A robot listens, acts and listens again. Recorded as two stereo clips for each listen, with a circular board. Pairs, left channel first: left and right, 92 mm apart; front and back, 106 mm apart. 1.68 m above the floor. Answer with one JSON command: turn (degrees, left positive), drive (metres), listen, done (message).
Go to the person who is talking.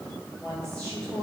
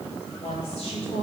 {"drive": 1.0}
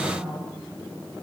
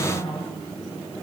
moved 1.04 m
{"drive": 1.0}
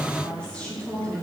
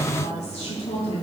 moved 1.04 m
{"turn": 10}
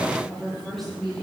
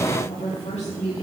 {"drive": 1.0}
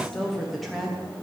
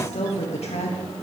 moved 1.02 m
{"drive": 1.0}
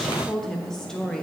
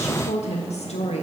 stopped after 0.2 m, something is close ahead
{"done": "Arrived at the woman speaking, straight ahead."}